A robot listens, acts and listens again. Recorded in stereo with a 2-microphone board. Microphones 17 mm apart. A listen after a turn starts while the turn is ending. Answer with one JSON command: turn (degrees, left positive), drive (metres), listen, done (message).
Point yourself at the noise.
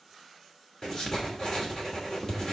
{"turn": 35}
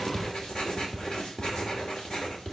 {"turn": 105}
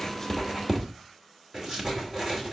{"turn": -20}
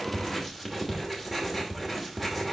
{"done": "Found it: writing, straight ahead."}